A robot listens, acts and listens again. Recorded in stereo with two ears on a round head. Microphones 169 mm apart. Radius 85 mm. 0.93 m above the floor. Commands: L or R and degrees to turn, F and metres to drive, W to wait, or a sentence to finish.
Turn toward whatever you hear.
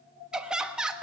R30
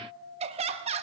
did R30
R145
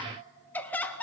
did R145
L10
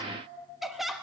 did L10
Facing the laughter.